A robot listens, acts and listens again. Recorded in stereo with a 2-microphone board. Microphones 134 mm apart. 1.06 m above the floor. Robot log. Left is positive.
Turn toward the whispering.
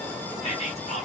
note: The whispering: about 55° left or 125° left.
cmd yaw +55
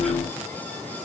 cmd idle
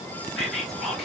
end: Found it: whispering, straight ahead.